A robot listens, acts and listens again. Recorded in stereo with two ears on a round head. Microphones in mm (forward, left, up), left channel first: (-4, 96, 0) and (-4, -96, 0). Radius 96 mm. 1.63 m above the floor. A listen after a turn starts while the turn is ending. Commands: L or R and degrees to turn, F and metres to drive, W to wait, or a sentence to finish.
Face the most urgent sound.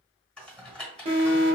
R30
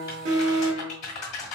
R120
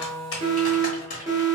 R15
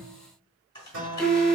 Found it: an alarm, straight ahead.